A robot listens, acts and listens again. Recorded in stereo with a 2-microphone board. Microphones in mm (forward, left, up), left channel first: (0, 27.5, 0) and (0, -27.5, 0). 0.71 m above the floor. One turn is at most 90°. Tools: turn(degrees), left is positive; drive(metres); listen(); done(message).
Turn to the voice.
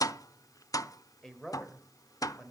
turn(degrees=30)
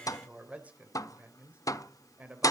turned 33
turn(degrees=-25)
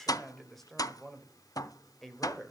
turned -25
done("Facing the man speaking.")